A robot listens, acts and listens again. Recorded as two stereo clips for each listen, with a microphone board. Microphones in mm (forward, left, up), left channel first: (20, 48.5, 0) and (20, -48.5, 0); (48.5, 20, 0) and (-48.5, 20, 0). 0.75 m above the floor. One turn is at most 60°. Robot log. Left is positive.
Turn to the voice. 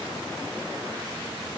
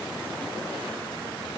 cmd idle
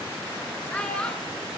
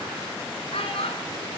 note: The child speaking: 10° left.
cmd yaw +10
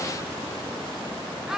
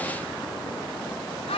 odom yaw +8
end: Found it: a child speaking, straight ahead.